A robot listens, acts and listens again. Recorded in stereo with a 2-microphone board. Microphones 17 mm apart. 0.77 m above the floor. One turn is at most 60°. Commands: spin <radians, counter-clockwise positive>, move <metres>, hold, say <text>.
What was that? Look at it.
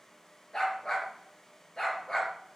spin 0.79
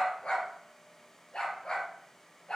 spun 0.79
spin 1.05
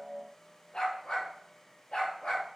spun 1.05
spin 0.96
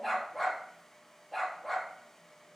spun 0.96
say Found it: a dog barking, straight ahead.